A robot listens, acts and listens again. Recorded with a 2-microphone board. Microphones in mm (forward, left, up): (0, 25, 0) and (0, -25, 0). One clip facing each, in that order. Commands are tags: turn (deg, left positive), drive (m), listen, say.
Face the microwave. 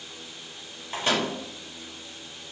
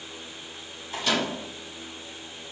<turn deg="40"/>
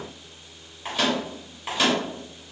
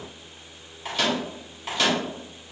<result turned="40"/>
<turn deg="15"/>
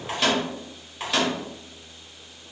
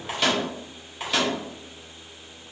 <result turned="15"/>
<say>Found it: a microwave, straight ahead.</say>